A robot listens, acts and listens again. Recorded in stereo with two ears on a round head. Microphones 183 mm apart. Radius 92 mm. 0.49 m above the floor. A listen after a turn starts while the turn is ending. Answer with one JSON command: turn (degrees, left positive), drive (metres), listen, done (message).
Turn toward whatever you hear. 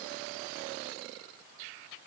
{"listen": true}
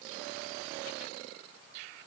{"listen": true}
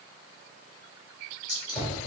{"turn": 35}
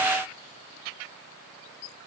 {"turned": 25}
{"listen": true}
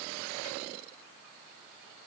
{"done": "I heard a gunshot, but can't make it out now. It was about 10° left or 120° left."}